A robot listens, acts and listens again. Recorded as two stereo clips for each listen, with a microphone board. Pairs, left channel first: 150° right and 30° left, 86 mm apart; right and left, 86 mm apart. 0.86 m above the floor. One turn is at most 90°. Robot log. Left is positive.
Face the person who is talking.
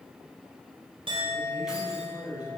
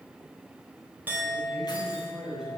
note: The man speaking: 170° left.
cmd yaw +90
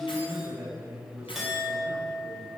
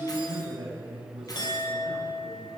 note: The man speaking is now 90° left.
cmd yaw +90
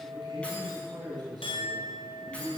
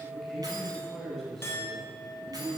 end: Facing the man speaking.